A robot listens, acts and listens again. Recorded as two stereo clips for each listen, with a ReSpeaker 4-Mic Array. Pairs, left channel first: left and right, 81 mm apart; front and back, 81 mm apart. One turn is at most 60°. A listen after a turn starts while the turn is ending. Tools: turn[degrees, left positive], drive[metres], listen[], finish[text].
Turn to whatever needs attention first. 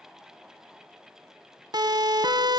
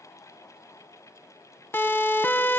Thought: The siren: 60° right.
Action: turn[-60]
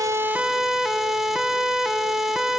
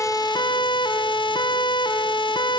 Action: finish[Facing the siren.]